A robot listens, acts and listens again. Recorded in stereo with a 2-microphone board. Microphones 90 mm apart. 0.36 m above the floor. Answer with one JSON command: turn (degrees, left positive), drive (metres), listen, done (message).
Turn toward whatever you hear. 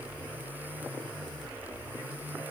{"listen": true}
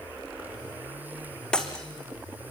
{"turn": 30}
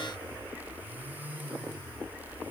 {"listen": true}
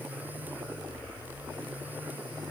{"done": "I heard breaking glass, but can't make it out now. It was about 20° right or 140° left."}